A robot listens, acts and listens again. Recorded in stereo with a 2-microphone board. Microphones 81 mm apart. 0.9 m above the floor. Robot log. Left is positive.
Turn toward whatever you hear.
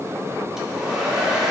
cmd yaw -30
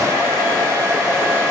note: So it is at 145° right.
cmd yaw -145
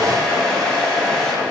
end: Found it: a hair dryer, straight ahead.